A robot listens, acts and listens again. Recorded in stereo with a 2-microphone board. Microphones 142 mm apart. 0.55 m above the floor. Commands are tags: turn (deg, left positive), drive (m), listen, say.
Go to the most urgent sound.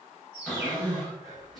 <turn deg="-25"/>
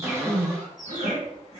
<turn deg="-125"/>
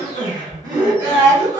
<turn deg="-35"/>
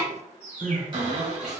<drive m="1.0"/>
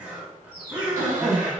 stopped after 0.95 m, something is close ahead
<turn deg="-15"/>
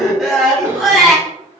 <say>I am next to the crying.</say>